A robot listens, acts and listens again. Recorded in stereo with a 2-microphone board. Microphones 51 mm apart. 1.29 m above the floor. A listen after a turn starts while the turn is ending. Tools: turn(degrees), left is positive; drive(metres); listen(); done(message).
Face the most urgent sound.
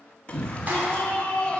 turn(degrees=25)
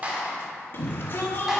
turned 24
turn(degrees=130)
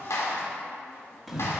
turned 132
done("Found it: a shout, straight ahead.")